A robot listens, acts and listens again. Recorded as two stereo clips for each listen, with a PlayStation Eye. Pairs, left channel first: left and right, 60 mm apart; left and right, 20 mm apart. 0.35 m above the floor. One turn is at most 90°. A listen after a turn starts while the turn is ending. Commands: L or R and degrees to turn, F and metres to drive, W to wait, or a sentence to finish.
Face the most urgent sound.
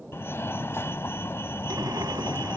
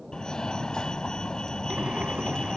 L45
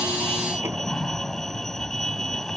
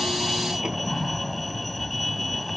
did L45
Found it: a fire alarm, straight ahead.